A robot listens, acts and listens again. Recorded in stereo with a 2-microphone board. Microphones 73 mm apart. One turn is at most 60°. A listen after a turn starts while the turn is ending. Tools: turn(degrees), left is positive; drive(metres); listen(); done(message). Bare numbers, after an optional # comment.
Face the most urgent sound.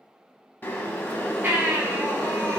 # The baby crying: about 25° right or 155° right.
turn(-25)
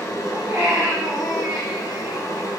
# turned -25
# So it is at 125° right.
turn(-60)
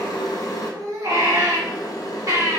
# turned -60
# The baby crying is now 60° right.
turn(-60)
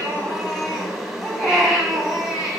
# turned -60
done("Facing the baby crying, 1 to 2 m away.")